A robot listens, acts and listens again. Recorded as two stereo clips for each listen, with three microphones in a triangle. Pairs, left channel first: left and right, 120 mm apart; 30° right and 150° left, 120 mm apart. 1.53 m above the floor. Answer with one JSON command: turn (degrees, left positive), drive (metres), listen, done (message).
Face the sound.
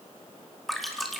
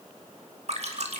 {"turn": 180}
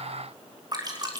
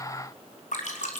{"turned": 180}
{"turn": -35}
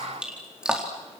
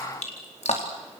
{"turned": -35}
{"done": "Found it: dripping, straight ahead, over 4 m away."}